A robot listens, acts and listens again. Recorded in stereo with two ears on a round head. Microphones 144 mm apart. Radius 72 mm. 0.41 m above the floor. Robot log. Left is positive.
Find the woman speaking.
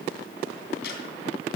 cmd idle
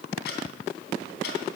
cmd idle
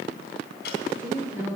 cmd yaw -30
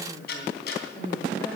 note: So it is at 15° left.
cmd yaw +15
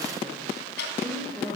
end: Found it: a woman speaking, straight ahead.